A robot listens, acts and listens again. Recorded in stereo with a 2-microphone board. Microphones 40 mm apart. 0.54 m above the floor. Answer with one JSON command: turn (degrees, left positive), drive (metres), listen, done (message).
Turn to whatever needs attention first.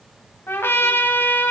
{"listen": true}
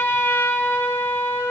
{"listen": true}
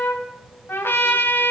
{"done": "I can't make out anything urgent, only a trumpet."}